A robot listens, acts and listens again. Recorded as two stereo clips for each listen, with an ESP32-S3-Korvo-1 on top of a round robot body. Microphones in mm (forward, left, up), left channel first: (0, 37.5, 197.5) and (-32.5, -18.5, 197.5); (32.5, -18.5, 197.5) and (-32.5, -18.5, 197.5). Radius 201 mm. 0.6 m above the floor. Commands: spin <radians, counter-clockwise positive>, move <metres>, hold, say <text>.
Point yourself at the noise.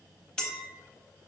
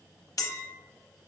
spin -0.35
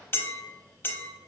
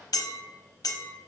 say Found it: a clink, straight ahead, under 1 m away.